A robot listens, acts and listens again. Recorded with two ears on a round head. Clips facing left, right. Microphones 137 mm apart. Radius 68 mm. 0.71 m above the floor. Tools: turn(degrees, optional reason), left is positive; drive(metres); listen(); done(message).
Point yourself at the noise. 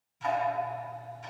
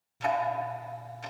turn(degrees=-70, reason="The ticking: about 70° right or 110° right.")
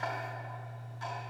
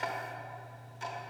turn(degrees=-25, reason="So it is at 25° right.")
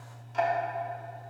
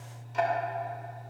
done("Found it: ticking, straight ahead, under 1 m away.")